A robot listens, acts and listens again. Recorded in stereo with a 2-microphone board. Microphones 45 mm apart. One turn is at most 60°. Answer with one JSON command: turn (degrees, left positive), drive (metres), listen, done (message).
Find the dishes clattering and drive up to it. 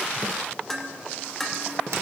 {"turn": 30}
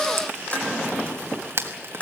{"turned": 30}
{"turn": 60}
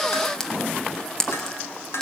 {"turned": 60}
{"turn": 60}
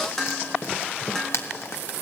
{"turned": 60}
{"turn": 10}
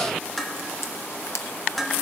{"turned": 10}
{"drive": 1.0}
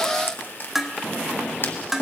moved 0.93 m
{"drive": 1.0}
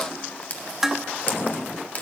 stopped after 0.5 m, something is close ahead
{"turn": -10}
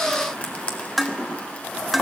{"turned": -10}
{"done": "I am next to the dishes clattering."}